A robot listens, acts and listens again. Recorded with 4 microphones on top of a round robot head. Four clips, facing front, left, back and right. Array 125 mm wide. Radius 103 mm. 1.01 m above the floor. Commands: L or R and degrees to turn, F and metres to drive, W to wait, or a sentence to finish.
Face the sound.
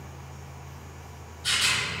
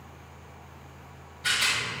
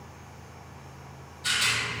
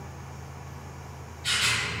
L105
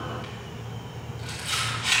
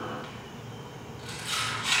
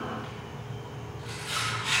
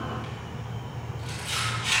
L15
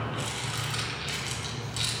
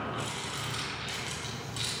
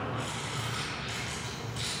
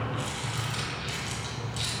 Found it: a rattle, straight ahead, 1 to 2 m away.